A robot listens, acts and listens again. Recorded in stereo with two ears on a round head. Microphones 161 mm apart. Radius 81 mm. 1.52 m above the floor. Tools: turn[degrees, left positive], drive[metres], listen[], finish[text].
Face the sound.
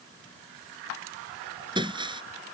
Thought: The breaking glass: about 25° right or 155° right.
Action: turn[-25]
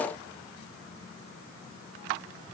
Action: listen[]
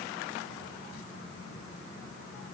Action: finish[I heard breaking glass, but can't make it out now. It was about straight ahead or 130° right.]